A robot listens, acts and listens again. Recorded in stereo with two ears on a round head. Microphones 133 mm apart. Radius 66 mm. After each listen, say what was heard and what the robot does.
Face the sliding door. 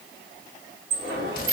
The sliding door: about 70° right or 110° right. Turn 70° right.
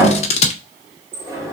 So it is at 20° right. Turn 20° right.
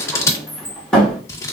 Found it: a sliding door, straight ahead.